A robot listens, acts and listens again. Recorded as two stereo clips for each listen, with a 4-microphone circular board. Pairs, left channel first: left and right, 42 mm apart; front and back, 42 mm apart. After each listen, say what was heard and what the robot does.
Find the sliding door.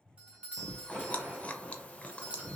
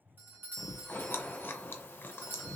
The sliding door: 40° right. Turn 40° right.
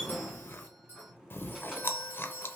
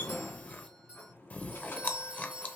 The sliding door is now 15° right. Turn 15° right.
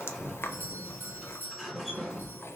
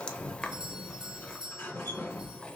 Facing the sliding door, 2 to 4 m away.